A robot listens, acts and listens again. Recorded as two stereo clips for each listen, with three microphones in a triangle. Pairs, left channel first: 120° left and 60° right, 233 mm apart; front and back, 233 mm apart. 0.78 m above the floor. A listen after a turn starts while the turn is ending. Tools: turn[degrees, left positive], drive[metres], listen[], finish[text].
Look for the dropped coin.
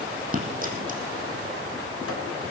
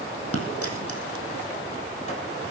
Action: finish[Facing the dropped coin, 2 to 4 m away.]